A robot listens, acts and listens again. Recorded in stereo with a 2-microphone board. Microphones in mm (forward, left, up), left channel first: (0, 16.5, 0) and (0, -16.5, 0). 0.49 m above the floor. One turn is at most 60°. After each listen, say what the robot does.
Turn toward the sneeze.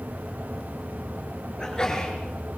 Turn 20° left.
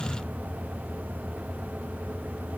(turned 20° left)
Keep listening.
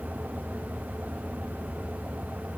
I heard a sneeze, but can't make it out now. It was about straight ahead or 140° left.